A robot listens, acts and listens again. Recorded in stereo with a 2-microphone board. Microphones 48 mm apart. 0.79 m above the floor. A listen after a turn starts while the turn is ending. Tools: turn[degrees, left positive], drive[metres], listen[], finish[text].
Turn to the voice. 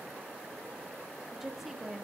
Action: turn[-30]
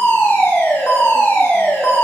Action: listen[]
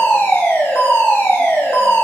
Action: listen[]
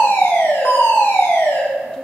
Action: finish[I heard a woman speaking, but can't make it out now. It was about 25° left or 145° right.]